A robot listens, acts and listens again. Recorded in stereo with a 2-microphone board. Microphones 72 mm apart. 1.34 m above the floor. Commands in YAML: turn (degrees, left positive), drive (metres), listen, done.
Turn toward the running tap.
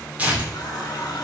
turn: 65
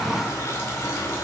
turn: 45
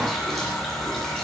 turn: 10
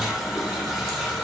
done: "Found it: a running tap, straight ahead."